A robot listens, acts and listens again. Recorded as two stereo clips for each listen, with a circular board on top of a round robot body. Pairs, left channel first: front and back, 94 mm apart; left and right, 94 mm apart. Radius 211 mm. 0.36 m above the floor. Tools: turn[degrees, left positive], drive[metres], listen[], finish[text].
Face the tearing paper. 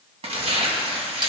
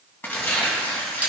Thought: The tearing paper: 160° left.
Action: turn[160]
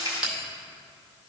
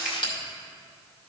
Action: listen[]
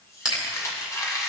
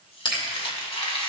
Thought: The tearing paper is now 60° left.
Action: turn[60]
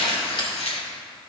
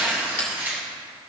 Thought: The tearing paper is now 20° right.
Action: turn[-20]
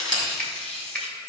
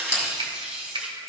Action: finish[Facing the tearing paper, 1 to 2 m away.]